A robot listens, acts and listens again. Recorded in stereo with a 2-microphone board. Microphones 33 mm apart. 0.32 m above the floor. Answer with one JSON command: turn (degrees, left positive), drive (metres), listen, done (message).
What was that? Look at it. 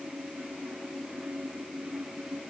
{"listen": true}
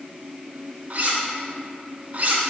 {"turn": -45}
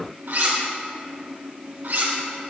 {"turn": -90}
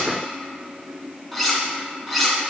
{"done": "Found it: cutlery clinking, straight ahead, 2 to 4 m away."}